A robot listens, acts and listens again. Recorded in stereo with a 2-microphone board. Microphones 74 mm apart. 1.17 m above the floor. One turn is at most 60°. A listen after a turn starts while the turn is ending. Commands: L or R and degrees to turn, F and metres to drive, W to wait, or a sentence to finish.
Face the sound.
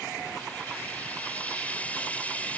L20
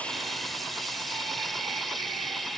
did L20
Found it: frying, straight ahead.